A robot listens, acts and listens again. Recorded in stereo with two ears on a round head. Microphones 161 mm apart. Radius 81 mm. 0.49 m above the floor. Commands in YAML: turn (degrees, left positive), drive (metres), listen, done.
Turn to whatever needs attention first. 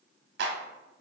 listen: true
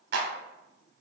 listen: true
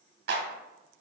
done: "I can't make out anything urgent to turn to."